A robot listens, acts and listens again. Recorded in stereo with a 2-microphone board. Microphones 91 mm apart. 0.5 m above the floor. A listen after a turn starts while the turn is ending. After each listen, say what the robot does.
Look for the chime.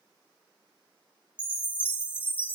Turn 90° left.
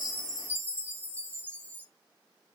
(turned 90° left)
Turn 15° left.
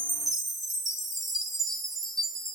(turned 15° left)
Found it: a chime, straight ahead.